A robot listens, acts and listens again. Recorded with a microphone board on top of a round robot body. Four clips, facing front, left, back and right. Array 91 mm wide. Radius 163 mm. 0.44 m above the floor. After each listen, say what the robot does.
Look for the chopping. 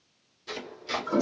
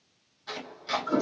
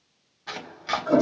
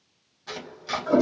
Turn 175° right.
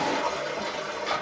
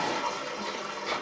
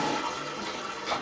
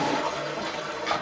Turn 65° right.
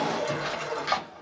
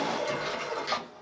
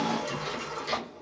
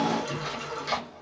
Found it: chopping, straight ahead.